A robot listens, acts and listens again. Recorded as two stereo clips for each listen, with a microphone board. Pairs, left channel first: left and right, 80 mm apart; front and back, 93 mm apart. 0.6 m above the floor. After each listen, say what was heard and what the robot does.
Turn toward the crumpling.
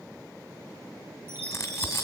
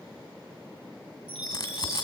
The crumpling: 35° left. Turn 35° left.
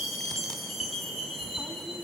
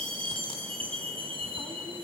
Keep listening.
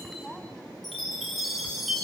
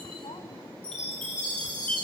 Found it: crumpling, straight ahead.